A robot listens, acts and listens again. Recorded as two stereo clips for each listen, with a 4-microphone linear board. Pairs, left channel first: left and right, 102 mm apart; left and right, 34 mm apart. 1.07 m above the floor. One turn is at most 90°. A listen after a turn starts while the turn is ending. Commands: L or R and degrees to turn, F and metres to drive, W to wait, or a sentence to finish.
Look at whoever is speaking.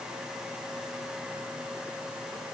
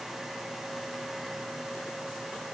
W
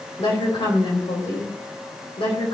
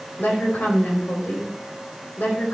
L60
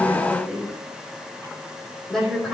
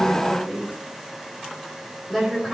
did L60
Facing the woman speaking, 2 to 4 m away.